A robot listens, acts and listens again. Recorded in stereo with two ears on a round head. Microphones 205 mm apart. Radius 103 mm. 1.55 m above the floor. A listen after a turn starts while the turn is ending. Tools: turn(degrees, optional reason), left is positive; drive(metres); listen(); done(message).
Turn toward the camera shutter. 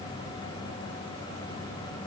listen()
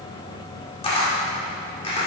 turn(degrees=25, reason="The camera shutter: about 25° left or 155° left.")
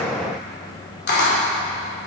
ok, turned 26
turn(degrees=125, reason="So it is at 125° left.")
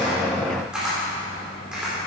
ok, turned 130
done("Facing the camera shutter, 2 to 4 m away.")